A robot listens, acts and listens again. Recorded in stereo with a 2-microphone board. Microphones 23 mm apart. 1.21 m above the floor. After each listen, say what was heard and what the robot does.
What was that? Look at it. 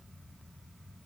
Keep listening.
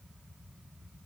Keep listening.
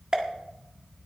The pop: about 30° right or 150° right. Turn 30° right.
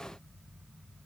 Keep listening.
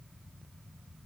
I heard a pop, but can't make it out now. It was about straight ahead or 120° right.